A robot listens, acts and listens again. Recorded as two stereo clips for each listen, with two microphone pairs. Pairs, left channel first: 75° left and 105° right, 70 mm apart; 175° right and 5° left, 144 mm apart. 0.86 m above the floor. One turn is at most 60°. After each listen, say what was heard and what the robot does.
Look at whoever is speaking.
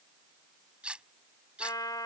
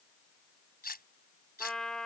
Keep listening.
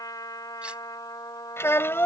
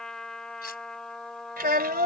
The child speaking: 15° left. Turn 15° left.
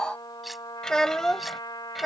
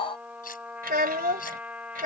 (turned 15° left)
The child speaking is now 15° right. Turn 15° right.
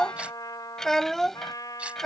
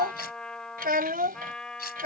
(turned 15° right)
The child speaking is now 10° right. Turn 10° right.
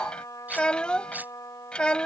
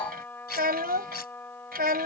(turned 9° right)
Facing the child speaking.